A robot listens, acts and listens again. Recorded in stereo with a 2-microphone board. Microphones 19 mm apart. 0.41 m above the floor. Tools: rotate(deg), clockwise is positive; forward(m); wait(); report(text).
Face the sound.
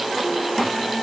wait()
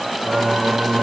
rotate(70)
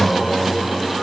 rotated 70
report("Facing the singing.")